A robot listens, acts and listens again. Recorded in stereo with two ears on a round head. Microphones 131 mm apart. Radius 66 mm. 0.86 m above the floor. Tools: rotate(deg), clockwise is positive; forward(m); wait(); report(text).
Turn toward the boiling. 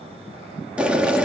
rotate(30)
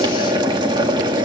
rotate(140)
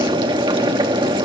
rotate(40)
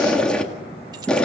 rotate(-10)
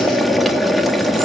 report("Found it: boiling, straight ahead.")